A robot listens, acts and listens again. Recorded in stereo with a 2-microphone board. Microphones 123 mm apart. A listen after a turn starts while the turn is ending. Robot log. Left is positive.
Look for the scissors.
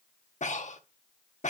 cmd idle
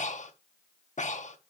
cmd idle
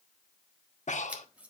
cmd yaw -30
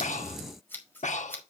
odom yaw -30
note: So it is at 20° left.
cmd yaw +20
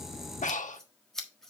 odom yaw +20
end: Found it: scissors, straight ahead, 1 to 2 m away.